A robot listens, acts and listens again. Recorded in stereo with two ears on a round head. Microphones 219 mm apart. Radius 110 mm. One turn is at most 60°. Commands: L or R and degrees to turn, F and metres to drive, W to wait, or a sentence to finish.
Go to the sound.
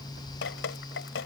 L50
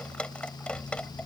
F1.0
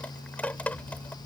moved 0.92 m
L10
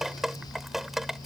F1.0
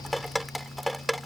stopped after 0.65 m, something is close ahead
I am next to the dripping.